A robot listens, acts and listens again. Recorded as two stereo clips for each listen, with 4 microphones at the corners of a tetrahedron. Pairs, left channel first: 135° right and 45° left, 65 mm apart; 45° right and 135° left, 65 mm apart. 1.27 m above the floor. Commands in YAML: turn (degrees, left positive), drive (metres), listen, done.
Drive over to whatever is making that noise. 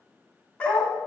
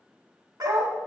turn: 155
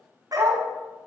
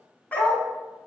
turn: 25
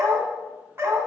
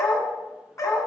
drive: 1.0
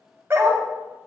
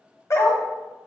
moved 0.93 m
drive: 1.0
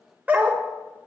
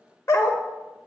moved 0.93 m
turn: -15
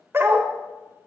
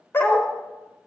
drive: 1.0
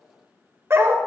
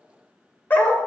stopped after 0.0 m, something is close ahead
turn: 10
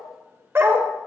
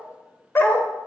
done: "Arrived at the dog barking, straight ahead."